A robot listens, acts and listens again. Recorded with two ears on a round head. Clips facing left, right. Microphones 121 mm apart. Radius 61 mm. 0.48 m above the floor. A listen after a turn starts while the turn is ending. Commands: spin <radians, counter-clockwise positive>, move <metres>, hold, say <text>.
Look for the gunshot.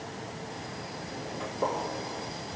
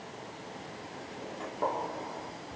spin 0.52
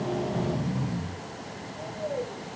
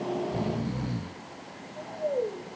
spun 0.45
hold
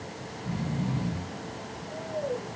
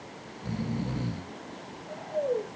say I heard a gunshot, but can't make it out now. It was about 15° right or 140° left.